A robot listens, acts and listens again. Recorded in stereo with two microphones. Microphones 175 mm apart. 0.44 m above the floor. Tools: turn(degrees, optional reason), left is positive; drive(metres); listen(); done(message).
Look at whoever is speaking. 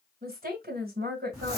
turn(degrees=-65, reason="The woman speaking: about 65° right or 115° right.")
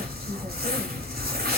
listen()
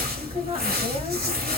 listen()
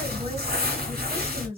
turn(degrees=-40, reason="So it is at 40° right.")
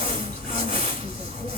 listen()
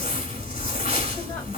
listen()
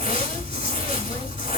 done("Facing where the woman speaking came from. I can't hear it now.")